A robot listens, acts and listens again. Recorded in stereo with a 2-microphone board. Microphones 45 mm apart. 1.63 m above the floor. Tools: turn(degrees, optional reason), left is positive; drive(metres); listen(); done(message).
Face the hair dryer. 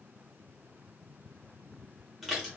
listen()
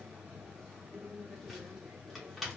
listen()
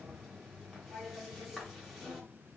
done("I can't make out a hair dryer to turn to.")